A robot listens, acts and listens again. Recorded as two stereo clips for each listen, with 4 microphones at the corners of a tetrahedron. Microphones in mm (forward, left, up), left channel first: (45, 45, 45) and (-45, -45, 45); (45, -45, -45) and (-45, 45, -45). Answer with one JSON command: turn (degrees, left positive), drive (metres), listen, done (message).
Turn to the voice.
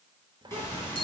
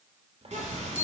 {"turn": 170}
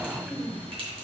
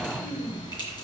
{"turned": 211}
{"turn": -40}
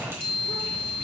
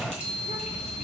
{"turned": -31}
{"turn": -10}
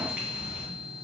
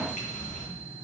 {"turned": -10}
{"listen": true}
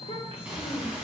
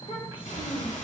{"done": "Facing the child speaking."}